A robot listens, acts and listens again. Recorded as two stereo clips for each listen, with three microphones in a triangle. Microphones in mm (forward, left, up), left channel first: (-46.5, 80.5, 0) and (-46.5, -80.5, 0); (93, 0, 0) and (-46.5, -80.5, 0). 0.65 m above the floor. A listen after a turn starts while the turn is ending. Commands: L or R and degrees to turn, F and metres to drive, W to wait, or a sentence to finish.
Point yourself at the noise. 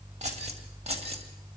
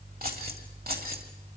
R140
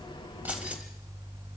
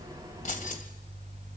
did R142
R10
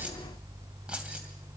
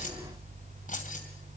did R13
Facing the keys jangling.